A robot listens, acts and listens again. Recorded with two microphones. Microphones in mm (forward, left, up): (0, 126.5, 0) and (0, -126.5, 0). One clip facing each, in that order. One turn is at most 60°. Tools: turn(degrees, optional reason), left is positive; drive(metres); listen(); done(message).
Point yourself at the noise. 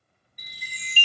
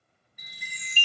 turn(degrees=40, reason="The chime: about 40° left or 140° left.")
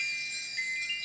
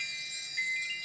done("Facing the chime.")